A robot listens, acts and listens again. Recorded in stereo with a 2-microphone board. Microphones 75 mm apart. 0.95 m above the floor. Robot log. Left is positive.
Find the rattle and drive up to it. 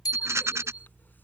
note: The rattle: about 40° right or 140° right.
cmd yaw -40
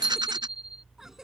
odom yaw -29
cmd idle
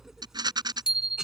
note: So it is at 110° right.
cmd yaw -110
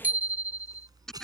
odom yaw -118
cmd fwd 1.0
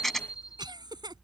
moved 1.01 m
cmd fwd 1.0
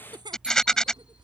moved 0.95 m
note: The rattle is now 10° left.
cmd yaw +10
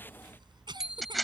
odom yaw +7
cmd fwd 1.0
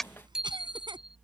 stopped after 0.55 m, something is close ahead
end: Arrived at the rattle, straight ahead.